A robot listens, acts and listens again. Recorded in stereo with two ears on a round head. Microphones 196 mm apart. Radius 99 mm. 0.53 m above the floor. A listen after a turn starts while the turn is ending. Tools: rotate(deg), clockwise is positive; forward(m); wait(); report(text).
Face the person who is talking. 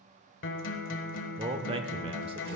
rotate(25)
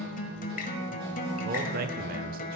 rotate(125)
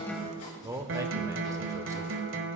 rotate(15)
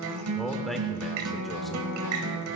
report("Found it: a man speaking, straight ahead.")